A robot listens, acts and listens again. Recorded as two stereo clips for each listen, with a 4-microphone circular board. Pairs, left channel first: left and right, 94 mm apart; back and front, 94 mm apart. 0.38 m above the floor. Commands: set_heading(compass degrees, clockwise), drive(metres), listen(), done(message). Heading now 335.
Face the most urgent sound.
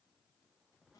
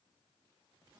listen()
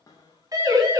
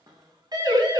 set_heading(15)
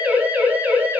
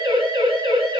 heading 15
set_heading(30)
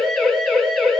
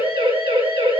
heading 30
done("Facing the siren.")